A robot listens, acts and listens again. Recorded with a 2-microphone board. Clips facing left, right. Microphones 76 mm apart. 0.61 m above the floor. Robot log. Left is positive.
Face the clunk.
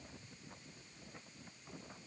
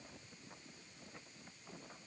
cmd idle
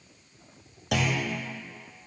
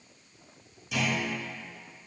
note: The clunk: about 75° left or 105° left.
cmd yaw +75
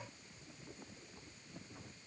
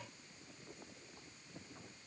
cmd idle
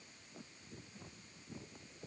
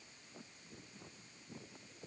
end: I heard a clunk, but can't make it out now. It was about straight ahead or 30° left.